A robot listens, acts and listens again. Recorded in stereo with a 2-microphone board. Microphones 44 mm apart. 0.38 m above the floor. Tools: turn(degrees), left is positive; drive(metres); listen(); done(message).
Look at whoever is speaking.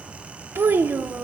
turn(degrees=-55)
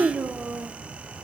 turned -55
turn(degrees=-45)
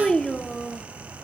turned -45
turn(degrees=15)
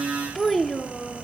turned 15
done("Found it: a child speaking, straight ahead, under 1 m away.")